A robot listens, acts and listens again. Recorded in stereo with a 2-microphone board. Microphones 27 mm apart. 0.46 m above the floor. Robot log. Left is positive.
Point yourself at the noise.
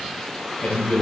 note: The man speaking: about 55° left or 125° left.
cmd yaw +55
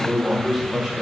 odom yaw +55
note: So it is at 15° right.
cmd yaw -15
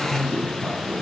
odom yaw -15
note: The man speaking is now 10° right.
cmd yaw -10
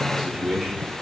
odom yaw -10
end: Found it: a man speaking, straight ahead, 2 to 4 m away.